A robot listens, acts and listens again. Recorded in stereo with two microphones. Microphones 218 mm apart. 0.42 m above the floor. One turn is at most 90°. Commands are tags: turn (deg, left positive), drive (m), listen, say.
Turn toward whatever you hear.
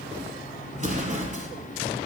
<turn deg="-35"/>
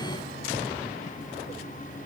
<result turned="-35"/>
<listen/>
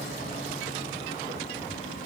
<say>I heard an explosion, but can't make it out now. It was about straight ahead or 110° right.</say>